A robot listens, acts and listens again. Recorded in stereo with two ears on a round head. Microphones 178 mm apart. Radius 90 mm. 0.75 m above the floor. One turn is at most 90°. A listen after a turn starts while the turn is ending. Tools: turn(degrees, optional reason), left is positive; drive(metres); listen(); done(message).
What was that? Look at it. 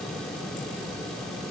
listen()
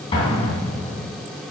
turn(degrees=30, reason="The explosion: about 30° left or 150° left.")
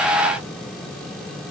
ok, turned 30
listen()
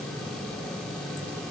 done("I heard an explosion, but can't make it out now. It was about straight ahead or 120° left.")